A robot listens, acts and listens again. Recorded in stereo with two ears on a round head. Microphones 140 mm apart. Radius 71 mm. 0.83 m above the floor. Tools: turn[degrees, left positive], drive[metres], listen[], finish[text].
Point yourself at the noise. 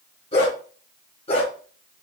Thought: The dog barking: about 40° left or 140° left.
Action: turn[40]
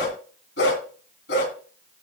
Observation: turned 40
Thought: So it is at 100° left.
Action: turn[100]
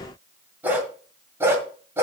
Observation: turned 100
Thought: The dog barking is now 15° right.
Action: turn[-15]
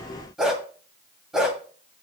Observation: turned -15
Action: finish[Facing the dog barking, 1 to 2 m away.]